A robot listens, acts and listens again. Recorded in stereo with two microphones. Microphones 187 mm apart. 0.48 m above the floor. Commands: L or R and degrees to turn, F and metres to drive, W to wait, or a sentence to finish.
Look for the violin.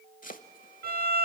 R55
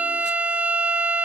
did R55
R10
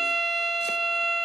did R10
Found it: a violin, straight ahead, 1 to 2 m away.